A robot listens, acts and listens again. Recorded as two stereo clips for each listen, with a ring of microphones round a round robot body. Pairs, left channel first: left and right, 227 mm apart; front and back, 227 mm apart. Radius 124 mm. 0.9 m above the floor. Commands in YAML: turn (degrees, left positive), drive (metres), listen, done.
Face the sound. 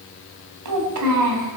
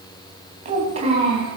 turn: -110
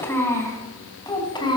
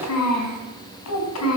turn: 20
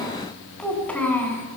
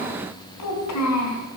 turn: 10
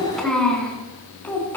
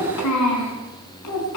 turn: 10
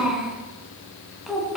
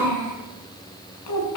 done: "Found it: a child speaking, straight ahead."